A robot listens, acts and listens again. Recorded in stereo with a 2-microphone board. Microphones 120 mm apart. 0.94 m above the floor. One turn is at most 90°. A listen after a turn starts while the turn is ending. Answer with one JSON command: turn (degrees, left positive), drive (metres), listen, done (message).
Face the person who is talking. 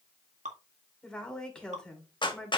{"turn": 30}
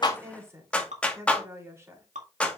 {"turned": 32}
{"turn": -25}
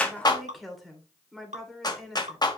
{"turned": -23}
{"done": "Facing the woman speaking."}